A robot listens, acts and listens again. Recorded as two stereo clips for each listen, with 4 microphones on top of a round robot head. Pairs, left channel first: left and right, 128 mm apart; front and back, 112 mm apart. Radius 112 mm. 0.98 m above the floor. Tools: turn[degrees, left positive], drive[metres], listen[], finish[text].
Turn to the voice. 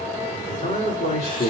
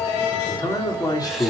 Thought: The man speaking: 55° left.
Action: turn[55]
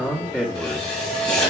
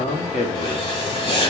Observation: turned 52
Thought: The man speaking is now 10° left.
Action: turn[10]
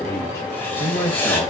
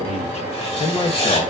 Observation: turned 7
Thought: The man speaking is now 35° left.
Action: turn[35]
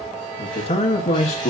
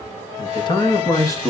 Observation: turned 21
Thought: The man speaking is now 60° left.
Action: turn[60]
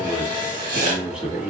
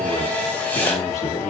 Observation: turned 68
Action: finish[Facing the man speaking, 1 to 2 m away.]